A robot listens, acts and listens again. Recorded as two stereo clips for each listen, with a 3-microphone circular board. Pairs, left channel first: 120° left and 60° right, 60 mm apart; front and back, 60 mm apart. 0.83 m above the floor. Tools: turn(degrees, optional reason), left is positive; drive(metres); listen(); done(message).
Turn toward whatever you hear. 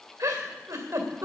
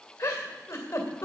turn(degrees=-25, reason="The giggle: 25° right.")
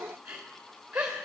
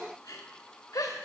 turn(degrees=10, reason="The giggle is now 10° left.")
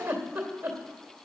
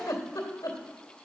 done("Found it: a giggle, straight ahead.")